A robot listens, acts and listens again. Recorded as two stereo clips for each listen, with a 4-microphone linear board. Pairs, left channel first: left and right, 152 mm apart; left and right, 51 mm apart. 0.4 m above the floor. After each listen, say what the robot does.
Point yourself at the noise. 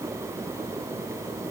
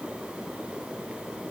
Keep listening.
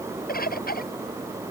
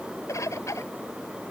Turn 90° left.
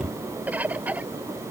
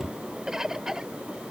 Turn 10° right.
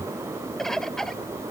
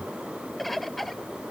Found it: a bird, straight ahead.